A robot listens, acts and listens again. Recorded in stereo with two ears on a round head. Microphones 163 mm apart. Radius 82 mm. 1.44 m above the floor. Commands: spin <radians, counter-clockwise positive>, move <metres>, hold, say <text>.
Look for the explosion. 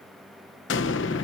spin 1.57
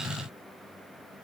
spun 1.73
spin -0.17
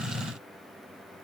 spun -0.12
say Facing where the explosion came from. I can't hear it now.